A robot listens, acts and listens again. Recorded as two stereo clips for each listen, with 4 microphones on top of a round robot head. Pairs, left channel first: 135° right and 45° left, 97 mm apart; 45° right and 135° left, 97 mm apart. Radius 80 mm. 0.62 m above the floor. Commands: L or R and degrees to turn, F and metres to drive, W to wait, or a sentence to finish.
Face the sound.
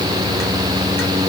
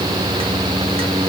W
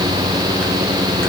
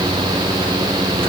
W
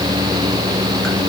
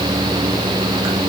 I can't make out anything.